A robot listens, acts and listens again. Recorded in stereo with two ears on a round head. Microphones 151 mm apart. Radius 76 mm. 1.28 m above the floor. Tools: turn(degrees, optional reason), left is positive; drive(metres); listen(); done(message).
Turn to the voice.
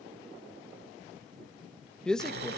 turn(degrees=30)
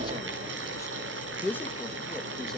turn(degrees=30)
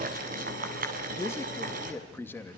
turn(degrees=30)
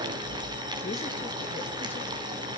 listen()
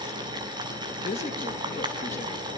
turn(degrees=135, reason="So it is at 135° left.")
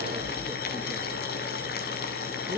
listen()
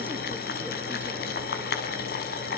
listen()
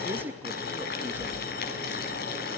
turn(degrees=-10, reason="The man speaking is now 10° right.")
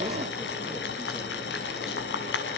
listen()
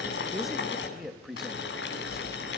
done("Found it: a man speaking, straight ahead, 2 to 4 m away.")